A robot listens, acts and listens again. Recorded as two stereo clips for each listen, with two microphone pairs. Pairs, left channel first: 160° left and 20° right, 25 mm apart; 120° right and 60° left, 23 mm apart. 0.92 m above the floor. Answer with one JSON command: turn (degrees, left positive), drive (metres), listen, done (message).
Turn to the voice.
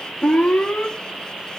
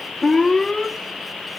{"listen": true}
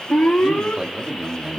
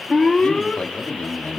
{"turn": -95}
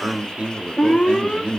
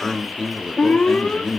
{"turn": -45}
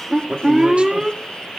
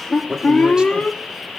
{"done": "Found it: a man speaking, straight ahead, 2 to 4 m away."}